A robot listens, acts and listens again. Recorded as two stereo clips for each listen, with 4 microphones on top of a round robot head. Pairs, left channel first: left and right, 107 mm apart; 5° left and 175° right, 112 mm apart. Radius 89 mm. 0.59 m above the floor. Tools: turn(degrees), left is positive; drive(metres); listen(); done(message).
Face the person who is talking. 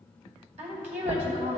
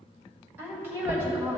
turn(degrees=-95)
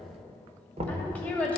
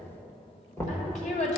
turn(degrees=15)
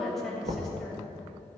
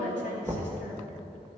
done("Facing the woman speaking.")